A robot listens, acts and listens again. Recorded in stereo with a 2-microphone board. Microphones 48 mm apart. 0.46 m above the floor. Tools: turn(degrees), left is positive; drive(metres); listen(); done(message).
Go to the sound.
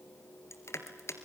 turn(degrees=75)
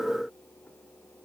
listen()
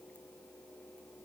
listen()
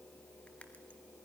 done("I heard crushing, but can't make it out now. It was about straight ahead or 30° left. I did not reach it.")